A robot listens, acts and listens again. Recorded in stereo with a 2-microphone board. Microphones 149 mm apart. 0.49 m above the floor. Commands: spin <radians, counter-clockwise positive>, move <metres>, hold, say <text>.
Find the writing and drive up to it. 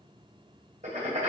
spin -0.96
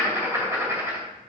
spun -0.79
spin -0.35
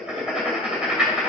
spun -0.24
move 1.0
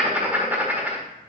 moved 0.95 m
spin -0.26
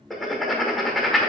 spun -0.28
move 1.0
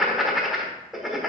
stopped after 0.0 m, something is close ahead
say I am next to the writing.